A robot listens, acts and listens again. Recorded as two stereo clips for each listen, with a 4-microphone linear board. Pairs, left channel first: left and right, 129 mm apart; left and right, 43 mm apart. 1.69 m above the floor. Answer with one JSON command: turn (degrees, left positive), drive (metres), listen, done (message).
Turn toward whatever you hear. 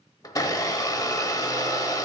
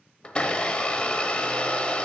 {"turn": 30}
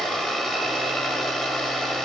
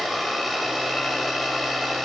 {"done": "Facing the blender."}